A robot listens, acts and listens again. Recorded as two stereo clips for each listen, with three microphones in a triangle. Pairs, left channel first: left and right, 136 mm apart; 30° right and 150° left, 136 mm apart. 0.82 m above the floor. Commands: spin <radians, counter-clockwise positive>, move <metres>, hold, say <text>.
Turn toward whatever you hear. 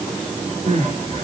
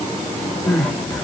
spin -1.92
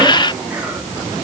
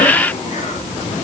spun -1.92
hold
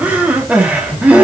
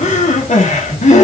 spin -0.17
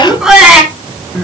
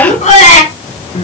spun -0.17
say Facing the crying.